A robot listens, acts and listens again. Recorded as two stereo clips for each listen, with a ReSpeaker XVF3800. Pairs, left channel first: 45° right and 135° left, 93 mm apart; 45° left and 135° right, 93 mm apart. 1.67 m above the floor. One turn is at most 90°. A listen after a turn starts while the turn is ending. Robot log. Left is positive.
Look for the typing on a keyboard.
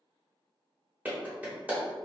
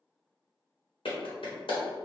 cmd idle
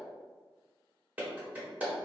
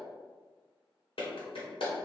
cmd idle
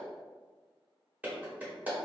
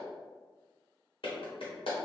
end: I can't make out typing on a keyboard to turn to.